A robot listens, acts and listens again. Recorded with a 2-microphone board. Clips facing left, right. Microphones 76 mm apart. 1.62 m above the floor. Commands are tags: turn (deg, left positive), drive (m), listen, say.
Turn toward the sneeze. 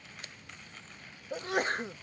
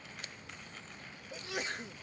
<turn deg="50"/>
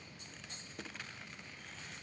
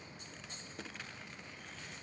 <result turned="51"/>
<listen/>
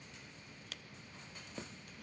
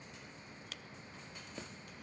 <say>I heard a sneeze, but can't make it out now. It was about straight ahead or 80° left.</say>